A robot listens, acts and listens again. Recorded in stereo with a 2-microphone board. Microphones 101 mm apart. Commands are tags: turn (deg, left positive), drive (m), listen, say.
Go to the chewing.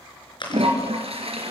<turn deg="50"/>
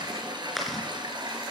<drive m="1.0"/>
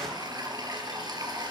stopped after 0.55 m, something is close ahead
<listen/>
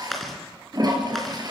<say>Something is in my way. I am facing the chewing but have not reached it.</say>